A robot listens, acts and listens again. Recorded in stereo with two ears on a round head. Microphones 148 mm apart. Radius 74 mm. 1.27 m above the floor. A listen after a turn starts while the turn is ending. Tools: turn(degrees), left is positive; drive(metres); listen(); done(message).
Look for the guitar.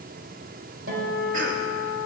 turn(degrees=-90)
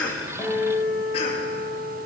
done("Found it: a guitar, straight ahead, over 4 m away.")